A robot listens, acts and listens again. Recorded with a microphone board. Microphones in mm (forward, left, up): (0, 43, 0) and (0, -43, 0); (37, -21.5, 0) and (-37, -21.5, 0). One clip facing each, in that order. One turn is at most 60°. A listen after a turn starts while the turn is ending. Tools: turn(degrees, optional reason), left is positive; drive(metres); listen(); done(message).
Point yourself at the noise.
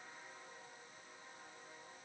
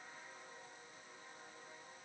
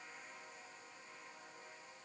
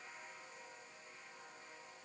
listen()
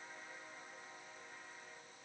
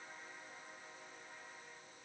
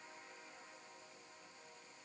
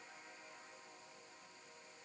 listen()
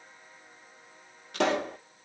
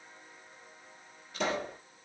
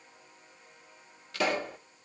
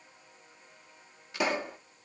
turn(degrees=60, reason="The pop: 110° left.")
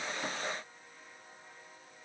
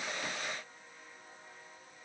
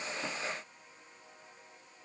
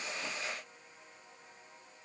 turn(degrees=50, reason="Nothing new. It was at 50° left.")
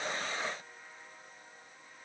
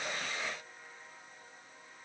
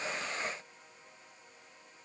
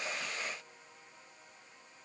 done("Facing where the pop came from. I can't hear it now.")